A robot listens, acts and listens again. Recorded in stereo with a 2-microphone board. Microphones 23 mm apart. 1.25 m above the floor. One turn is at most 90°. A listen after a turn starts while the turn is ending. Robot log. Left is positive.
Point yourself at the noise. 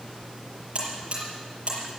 note: The buzzer: about 50° right or 130° right.
cmd yaw -50
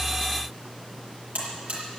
note: So it is at 80° right.
cmd yaw -80
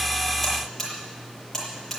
end: Facing the buzzer.